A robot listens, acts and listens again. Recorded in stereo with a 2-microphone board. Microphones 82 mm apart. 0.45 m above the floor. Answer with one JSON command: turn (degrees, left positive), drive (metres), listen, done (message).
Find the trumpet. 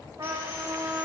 {"turn": -60}
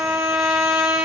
{"turn": -10}
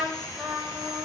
{"done": "Found it: a trumpet, straight ahead."}